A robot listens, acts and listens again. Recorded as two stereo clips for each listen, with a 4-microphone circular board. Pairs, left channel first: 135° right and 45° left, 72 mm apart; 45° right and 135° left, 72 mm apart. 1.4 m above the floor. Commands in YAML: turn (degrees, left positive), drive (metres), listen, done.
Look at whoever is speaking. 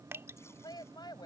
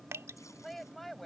turn: -135
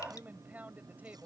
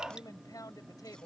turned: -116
turn: -25
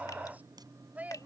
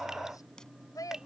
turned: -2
turn: -25
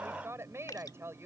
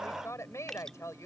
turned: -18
done: "Found it: a woman speaking, straight ahead."